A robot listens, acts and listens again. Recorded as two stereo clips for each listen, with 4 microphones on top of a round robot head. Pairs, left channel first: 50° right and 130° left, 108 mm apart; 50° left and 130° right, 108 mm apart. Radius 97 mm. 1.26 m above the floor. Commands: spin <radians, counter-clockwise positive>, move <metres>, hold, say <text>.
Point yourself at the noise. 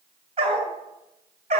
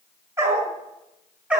spin 2.62
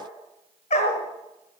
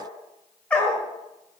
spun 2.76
spin -0.52
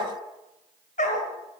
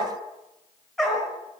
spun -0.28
spin -0.70
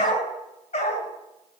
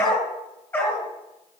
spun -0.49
spin -0.35
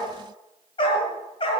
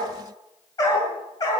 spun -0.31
say Facing the dog barking.